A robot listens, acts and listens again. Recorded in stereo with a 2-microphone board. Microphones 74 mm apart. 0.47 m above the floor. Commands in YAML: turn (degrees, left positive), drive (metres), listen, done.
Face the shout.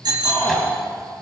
turn: 35
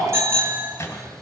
listen: true
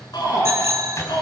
turn: 105
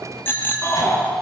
turn: 40
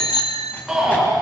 done: "Facing the shout, over 4 m away."